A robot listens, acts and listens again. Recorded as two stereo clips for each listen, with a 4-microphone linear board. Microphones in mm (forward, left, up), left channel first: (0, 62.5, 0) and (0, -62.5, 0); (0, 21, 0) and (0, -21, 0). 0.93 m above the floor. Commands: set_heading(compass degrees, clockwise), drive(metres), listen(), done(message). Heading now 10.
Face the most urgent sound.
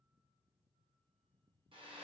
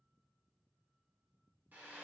listen()
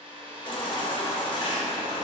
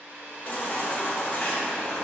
set_heading(330)
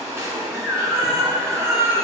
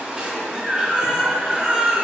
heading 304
set_heading(324)
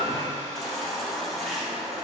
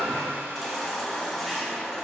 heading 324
done("Facing the baby crying.")